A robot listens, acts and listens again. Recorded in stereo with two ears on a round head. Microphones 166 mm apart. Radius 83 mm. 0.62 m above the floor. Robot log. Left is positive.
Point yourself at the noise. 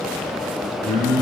note: The singing: about 15° left or 165° left.
cmd yaw +15
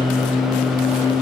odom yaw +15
note: So it is at 135° left.
cmd yaw +135
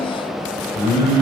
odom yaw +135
note: The singing is now 40° right.
cmd yaw -40
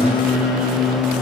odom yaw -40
note: The singing is now 10° right.
cmd yaw -10
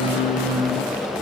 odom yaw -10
end: Facing the singing.